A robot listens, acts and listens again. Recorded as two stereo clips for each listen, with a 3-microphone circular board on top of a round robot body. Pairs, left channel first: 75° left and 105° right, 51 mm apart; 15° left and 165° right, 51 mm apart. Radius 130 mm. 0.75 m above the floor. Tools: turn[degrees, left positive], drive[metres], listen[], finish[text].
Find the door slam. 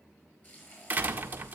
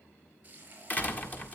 Thought: The door slam: 45° right.
Action: turn[-45]
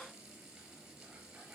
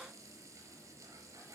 Action: finish[I heard a door slam from this way, but can't make it out now.]